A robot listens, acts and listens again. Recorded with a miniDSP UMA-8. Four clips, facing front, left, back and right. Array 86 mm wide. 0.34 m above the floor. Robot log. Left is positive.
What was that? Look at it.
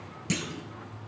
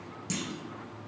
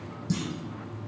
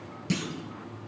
note: The clunk: 20° right.
cmd yaw -20
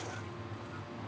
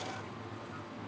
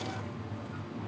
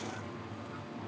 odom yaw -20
end: I heard a clunk from this way, but can't make it out now.